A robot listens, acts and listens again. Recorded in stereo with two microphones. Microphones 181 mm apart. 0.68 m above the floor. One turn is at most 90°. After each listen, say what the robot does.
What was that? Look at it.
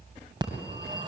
Turn 25° right.
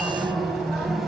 Facing the phone ringing, 2 to 4 m away.